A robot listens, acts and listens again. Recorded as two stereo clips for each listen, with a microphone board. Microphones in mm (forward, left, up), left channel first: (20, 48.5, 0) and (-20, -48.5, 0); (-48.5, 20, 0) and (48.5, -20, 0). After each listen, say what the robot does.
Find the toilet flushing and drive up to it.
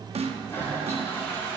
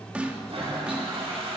Drive 1.0 m forward.
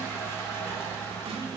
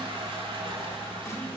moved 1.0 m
Drive 1.0 m forward.
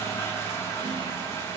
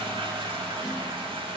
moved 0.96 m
Drive 1.0 m forward.
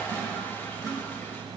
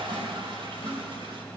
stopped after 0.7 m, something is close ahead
Arrived at the toilet flushing, straight ahead.